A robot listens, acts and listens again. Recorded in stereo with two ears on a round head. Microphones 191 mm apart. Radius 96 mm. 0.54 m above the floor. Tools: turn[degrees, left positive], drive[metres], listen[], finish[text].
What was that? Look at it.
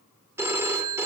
Action: turn[-30]
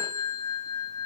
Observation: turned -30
Thought: So it is at 15° left.
Action: turn[15]
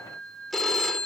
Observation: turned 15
Action: finish[Found it: a phone ringing, straight ahead.]